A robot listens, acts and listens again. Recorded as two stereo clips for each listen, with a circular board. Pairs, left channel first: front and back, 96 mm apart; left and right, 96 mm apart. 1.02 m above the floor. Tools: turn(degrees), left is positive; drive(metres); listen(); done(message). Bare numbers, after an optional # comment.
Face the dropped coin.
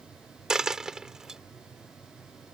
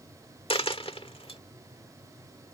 # The dropped coin: 95° left.
turn(95)
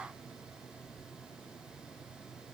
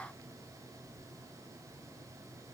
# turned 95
done("Facing where the dropped coin came from. I can't hear it now.")